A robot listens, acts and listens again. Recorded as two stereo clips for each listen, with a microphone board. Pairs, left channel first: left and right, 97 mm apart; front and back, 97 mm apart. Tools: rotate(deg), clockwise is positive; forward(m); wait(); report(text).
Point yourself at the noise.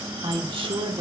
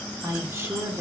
rotate(110)
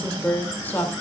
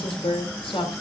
rotate(-20)
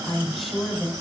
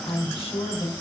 report("Found it: a woman speaking, straight ahead, over 4 m away.")